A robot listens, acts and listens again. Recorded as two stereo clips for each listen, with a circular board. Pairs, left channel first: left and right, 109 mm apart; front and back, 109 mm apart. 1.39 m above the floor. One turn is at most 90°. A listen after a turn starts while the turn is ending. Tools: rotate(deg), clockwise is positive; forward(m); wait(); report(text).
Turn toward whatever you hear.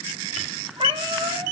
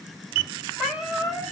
rotate(90)
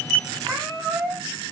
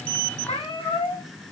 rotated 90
rotate(25)
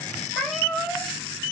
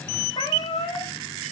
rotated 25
report("Found it: a cat meowing, straight ahead.")